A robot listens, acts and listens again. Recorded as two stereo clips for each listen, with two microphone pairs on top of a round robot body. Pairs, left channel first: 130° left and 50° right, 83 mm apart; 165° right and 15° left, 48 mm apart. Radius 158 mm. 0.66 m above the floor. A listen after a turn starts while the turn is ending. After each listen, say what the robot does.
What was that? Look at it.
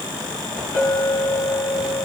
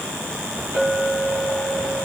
Facing the clink, over 4 m away.